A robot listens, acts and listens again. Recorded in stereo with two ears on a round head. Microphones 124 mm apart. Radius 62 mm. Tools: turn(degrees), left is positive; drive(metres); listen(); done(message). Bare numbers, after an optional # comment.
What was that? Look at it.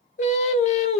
# The singing: about 50° left or 130° left.
turn(50)
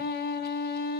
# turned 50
# So it is at 75° left.
turn(75)
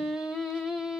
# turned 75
done("Found it: singing, straight ahead, under 1 m away.")